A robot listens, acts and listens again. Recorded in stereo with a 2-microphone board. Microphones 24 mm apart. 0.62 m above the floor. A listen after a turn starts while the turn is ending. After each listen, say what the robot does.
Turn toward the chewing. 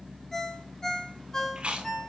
Turn 60° right.
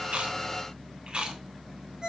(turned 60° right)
Turn 55° right.
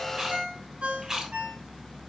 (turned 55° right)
Turn 25° right.
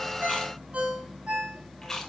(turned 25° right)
Turn 20° left.
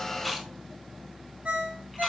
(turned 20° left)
Keep listening.
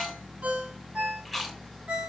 Facing the chewing.